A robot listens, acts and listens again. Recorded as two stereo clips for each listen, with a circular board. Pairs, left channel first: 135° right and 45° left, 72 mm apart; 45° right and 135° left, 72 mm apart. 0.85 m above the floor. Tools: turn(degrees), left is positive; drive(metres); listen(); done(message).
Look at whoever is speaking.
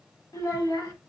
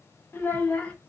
turn(degrees=-115)
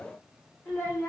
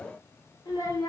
turn(degrees=-75)
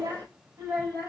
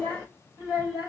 turn(degrees=-10)
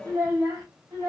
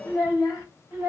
done("Found it: a child speaking, straight ahead, 2 to 4 m away.")